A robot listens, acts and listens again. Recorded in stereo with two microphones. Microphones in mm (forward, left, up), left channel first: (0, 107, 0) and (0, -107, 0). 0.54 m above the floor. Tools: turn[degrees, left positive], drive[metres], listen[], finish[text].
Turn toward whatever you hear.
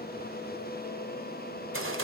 Action: turn[-90]
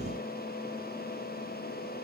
Action: finish[Facing where the gunshot came from. I can't hear it now.]